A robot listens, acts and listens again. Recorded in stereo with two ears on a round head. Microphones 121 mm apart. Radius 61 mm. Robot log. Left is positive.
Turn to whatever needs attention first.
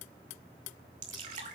cmd idle
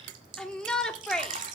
cmd yaw +30
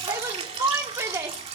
note: So it is at 20° right.
cmd yaw -20
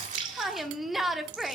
end: Found it: a shout, straight ahead.